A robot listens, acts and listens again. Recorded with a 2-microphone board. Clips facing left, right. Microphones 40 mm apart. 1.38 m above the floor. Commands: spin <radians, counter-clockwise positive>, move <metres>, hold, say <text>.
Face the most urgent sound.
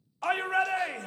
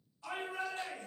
spin 1.13
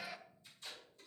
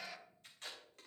say Found it: a shout, straight ahead.